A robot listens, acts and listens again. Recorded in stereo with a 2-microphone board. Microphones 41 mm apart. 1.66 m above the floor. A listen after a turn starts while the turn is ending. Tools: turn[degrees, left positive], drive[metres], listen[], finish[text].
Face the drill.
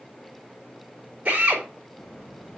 Thought: The drill: about 35° right or 145° right.
Action: turn[-35]
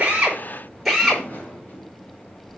Action: finish[Facing the drill.]